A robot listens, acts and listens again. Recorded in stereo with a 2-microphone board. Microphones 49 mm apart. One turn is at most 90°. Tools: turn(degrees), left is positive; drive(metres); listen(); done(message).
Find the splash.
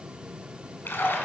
turn(degrees=45)
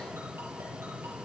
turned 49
listen()
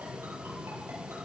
done("I heard a splash, but can't make it out now. It was about straight ahead or 85° left.")